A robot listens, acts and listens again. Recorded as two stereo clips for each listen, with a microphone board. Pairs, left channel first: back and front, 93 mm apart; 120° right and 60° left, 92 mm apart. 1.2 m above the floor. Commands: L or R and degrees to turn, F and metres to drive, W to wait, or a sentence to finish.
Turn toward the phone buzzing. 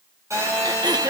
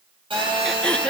L55
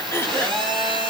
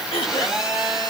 R25
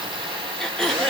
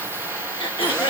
Facing the phone buzzing, over 4 m away.